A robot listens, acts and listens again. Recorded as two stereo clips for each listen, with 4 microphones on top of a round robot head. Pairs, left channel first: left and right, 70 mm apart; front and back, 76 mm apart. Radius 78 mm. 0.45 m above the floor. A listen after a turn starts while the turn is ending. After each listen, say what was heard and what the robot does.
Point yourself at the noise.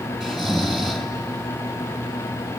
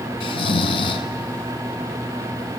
Facing the snoring, under 1 m away.